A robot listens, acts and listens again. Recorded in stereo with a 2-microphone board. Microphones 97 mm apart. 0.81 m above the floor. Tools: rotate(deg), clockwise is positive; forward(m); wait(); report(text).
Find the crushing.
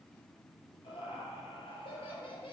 wait()
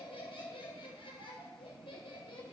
wait()
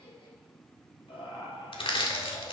rotate(-70)
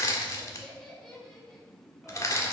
rotate(-35)
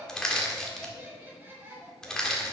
report("Facing the crushing, 1 to 2 m away.")